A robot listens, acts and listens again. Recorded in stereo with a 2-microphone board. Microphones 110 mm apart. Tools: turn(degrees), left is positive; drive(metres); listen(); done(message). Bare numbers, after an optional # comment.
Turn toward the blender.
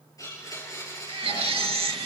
# The blender: about 30° left or 150° left.
turn(30)
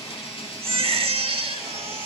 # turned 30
# So it is at 120° left.
turn(120)
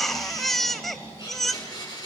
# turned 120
# The blender is now 40° left.
turn(40)
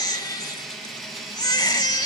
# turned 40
done("Facing the blender.")